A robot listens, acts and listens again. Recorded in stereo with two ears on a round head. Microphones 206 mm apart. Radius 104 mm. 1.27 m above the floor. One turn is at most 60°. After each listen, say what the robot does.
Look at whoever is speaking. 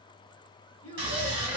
Turn 60° left.
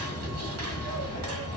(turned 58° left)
Keep listening.
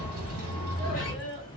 Facing the child speaking.